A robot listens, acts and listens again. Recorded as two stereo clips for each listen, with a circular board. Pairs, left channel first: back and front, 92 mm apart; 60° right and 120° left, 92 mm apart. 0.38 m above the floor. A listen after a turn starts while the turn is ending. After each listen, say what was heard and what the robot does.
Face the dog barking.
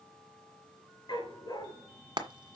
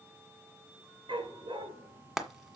The dog barking: 140° left. Turn 140° left.
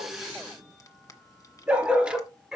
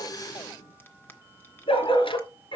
The dog barking is now 80° right. Turn 80° right.
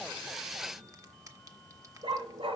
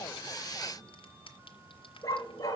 The dog barking is now 10° right. Turn 10° right.
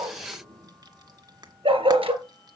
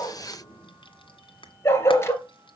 Facing the dog barking, 2 to 4 m away.